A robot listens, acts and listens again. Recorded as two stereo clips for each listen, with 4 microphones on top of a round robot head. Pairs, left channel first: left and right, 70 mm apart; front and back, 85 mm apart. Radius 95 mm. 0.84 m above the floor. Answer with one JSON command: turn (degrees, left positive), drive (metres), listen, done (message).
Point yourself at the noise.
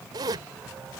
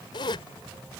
{"turn": -45}
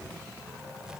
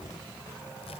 {"listen": true}
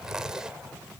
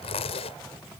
{"done": "Facing the zipper."}